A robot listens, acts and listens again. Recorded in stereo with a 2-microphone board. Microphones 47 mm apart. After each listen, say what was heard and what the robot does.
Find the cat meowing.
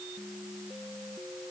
Keep listening.
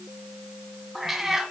Turn 30° right.
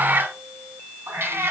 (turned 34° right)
So it is at 105° right. Turn 105° right.
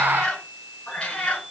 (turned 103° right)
The cat meowing is now 30° left. Turn 30° left.
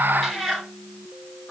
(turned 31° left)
Facing the cat meowing, 2 to 4 m away.